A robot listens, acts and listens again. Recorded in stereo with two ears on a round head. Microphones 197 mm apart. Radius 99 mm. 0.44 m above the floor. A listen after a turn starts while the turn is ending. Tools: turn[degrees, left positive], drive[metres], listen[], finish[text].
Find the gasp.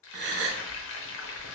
Thought: The gasp: about 55° right or 125° right.
Action: turn[-55]
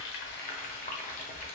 Action: listen[]
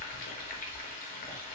Action: finish[I heard a gasp, but can't make it out now. It was about straight ahead or 70° right.]